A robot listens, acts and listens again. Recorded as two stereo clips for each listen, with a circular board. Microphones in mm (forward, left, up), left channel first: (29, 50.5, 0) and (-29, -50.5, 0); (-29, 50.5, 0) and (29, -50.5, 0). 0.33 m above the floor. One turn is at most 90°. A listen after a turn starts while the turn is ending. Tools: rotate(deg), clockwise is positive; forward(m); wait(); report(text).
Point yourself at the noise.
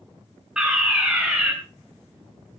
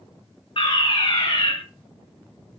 rotate(-90)
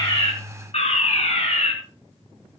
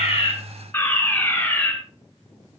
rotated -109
rotate(-50)
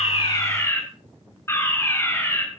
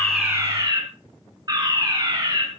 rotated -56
report("Facing the fire alarm.")